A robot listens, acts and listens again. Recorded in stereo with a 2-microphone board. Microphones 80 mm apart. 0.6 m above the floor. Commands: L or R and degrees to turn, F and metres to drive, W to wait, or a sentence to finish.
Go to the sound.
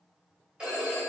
R30
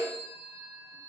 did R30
R135
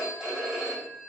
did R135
F1.0
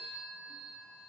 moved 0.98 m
F1.0
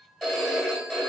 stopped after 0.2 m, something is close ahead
I am next to the phone ringing.